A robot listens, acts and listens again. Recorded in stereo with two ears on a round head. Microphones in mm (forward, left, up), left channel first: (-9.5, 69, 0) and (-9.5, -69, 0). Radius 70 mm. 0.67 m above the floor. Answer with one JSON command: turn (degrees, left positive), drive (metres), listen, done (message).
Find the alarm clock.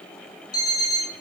{"turn": 25}
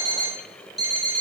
{"done": "Found it: an alarm clock, straight ahead."}